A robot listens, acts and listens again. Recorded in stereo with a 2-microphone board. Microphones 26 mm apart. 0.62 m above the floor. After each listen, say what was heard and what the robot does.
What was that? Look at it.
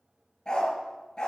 The dog barking: about 30° left or 150° left. Turn 30° left.
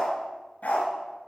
So it is at 115° left. Turn 115° left.
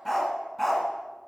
Found it: a dog barking, straight ahead.